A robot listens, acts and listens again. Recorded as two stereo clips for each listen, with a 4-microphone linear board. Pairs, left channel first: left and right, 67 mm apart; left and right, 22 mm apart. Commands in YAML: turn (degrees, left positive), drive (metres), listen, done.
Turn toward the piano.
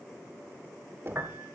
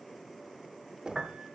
turn: -35
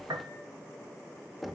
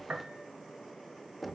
turn: -105
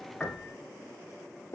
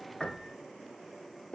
listen: true
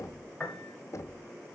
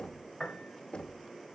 turn: 20
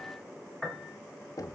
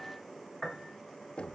done: "Facing the piano, 1 to 2 m away."